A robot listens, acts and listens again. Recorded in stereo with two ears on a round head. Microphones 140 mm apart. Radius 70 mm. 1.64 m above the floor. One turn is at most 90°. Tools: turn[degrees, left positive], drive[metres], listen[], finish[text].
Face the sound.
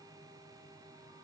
Action: listen[]
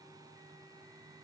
Action: listen[]
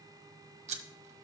Thought: The scissors: about 45° right or 135° right.
Action: turn[-45]
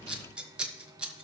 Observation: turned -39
Action: finish[Facing the scissors.]